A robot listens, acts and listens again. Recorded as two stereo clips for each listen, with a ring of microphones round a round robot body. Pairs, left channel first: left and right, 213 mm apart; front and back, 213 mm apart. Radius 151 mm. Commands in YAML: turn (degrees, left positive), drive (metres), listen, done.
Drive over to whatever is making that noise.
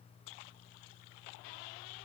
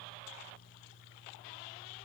listen: true
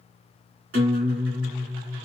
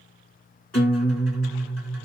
turn: -85
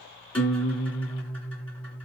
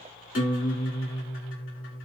turn: 10
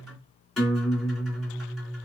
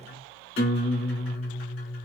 drive: 1.0
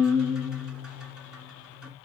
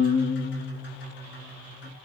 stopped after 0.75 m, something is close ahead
done: "Arrived at the guitar, straight ahead."